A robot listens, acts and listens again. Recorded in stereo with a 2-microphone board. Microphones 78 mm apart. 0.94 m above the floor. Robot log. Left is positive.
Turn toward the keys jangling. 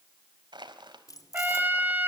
note: The keys jangling: about 50° left or 130° left.
cmd yaw +50
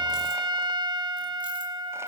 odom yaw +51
cmd idle
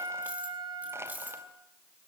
note: So it is at 20° right.
cmd yaw -20
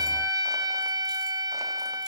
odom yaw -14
cmd idle
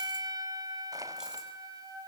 cmd idle
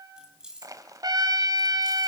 note: The keys jangling is now 10° right.
cmd yaw -10
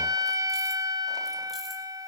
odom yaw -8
cmd idle
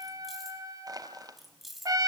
end: Found it: keys jangling, straight ahead, over 4 m away.